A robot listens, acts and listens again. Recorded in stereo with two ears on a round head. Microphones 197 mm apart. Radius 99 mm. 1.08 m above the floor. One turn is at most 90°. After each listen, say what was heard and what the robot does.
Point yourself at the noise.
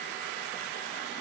Keep listening.
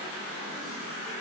Keep listening.
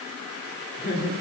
The laughter: about 55° left or 125° left. Turn 55° left.
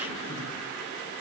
Keep listening.
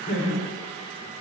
So it is at 55° left. Turn 55° left.
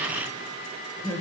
The laughter is now 20° left. Turn 20° left.
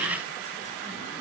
Keep listening.
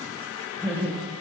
The laughter is now 10° left. Turn 10° left.
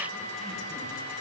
Keep listening.
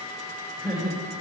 Facing the laughter, over 4 m away.